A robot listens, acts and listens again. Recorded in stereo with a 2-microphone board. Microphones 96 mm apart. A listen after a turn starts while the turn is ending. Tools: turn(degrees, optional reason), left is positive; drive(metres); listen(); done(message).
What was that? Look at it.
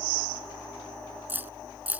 turn(degrees=-20, reason="The keys jangling: about 20° right or 160° right.")
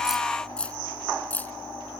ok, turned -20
turn(degrees=15, reason="So it is at 15° left.")
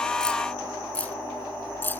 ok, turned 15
turn(degrees=20, reason="The keys jangling is now 20° left.")
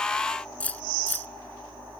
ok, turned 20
turn(degrees=15, reason="The keys jangling is now 15° left.")
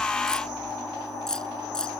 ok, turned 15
done("Found it: keys jangling, straight ahead.")